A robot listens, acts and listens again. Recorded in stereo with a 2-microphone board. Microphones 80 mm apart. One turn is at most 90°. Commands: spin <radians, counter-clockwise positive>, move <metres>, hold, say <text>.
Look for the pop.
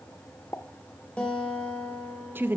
spin 0.61
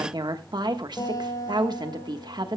hold
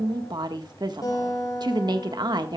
say I heard a pop, but can't make it out now. It was about straight ahead or 110° left.